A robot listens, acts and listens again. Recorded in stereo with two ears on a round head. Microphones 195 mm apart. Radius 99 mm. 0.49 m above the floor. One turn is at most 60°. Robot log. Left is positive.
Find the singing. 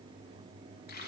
cmd idle
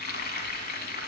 cmd idle
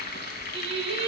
note: The singing: about 30° right or 150° right.
cmd yaw -30
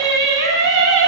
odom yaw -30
note: So it is at 115° right.
cmd yaw -60
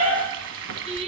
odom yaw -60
note: The singing is now 30° right.
cmd yaw -30
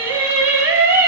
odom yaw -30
note: The singing is now 10° right.
cmd yaw -10
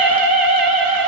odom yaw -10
end: Facing the singing, 2 to 4 m away.